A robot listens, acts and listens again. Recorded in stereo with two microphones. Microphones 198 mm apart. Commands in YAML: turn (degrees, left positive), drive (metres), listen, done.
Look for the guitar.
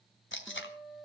turn: -30
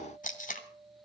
turn: -145
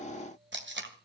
listen: true
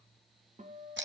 turn: -35
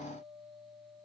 turn: -10
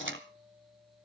listen: true
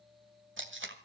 listen: true
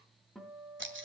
done: "Facing the guitar."